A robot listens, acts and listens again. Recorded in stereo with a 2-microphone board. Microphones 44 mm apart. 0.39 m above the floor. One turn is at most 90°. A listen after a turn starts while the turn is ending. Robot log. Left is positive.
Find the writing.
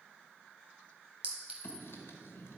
note: The writing: about 70° left or 110° left.
cmd yaw +70
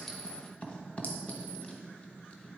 note: So it is at 30° left.
cmd yaw +30
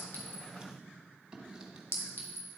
note: The writing is now 20° right.
cmd yaw -20
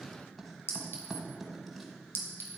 end: Found it: writing, straight ahead, 1 to 2 m away.